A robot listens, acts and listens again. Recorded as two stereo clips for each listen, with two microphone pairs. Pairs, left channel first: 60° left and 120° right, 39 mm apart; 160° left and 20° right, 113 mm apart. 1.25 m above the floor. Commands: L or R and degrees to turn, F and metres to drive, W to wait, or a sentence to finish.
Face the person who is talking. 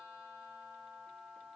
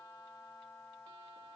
W
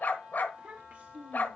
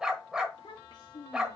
R155
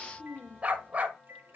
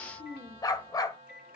Facing the child speaking, 2 to 4 m away.